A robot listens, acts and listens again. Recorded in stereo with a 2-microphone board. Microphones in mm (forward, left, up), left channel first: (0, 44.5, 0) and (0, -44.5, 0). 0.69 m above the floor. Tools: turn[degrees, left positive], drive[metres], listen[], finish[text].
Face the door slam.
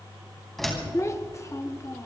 Action: turn[30]
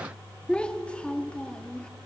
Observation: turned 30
Action: listen[]
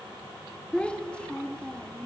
Action: finish[I heard a door slam, but can't make it out now. It was about 25° right or 145° left.]